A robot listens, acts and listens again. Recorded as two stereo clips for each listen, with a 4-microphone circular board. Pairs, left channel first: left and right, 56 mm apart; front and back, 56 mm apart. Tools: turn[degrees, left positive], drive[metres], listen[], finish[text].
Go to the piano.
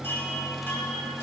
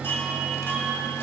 Action: listen[]
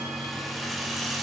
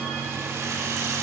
Action: listen[]
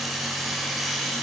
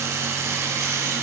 Action: finish[I can't make out a piano to turn to.]